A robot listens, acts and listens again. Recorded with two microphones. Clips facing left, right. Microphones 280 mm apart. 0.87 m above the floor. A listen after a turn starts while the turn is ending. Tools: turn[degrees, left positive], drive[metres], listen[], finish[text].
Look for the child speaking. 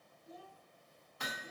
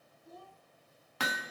Thought: The child speaking: about 50° right or 130° right.
Action: turn[-50]
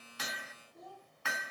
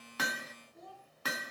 Thought: So it is at 10° left.
Action: turn[10]
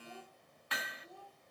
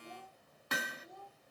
Thought: The child speaking is now 10° left.
Action: turn[10]
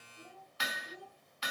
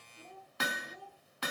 Thought: The child speaking is now 10° left.
Action: turn[10]
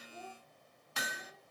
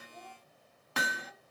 Action: finish[Found it: a child speaking, straight ahead.]